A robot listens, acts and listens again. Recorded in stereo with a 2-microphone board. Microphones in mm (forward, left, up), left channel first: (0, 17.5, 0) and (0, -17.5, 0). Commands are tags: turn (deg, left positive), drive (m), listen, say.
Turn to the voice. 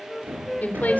<turn deg="50"/>
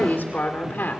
<turn deg="80"/>
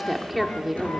<say>Facing the woman speaking, 2 to 4 m away.</say>